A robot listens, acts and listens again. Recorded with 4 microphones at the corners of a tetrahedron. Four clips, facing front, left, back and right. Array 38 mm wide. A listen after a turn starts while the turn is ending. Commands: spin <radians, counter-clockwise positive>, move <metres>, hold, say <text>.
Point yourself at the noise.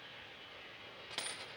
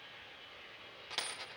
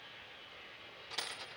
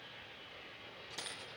spin 1.31
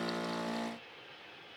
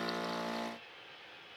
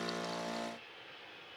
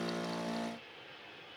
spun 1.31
say Facing where the dropped coin came from. I can't hear it now.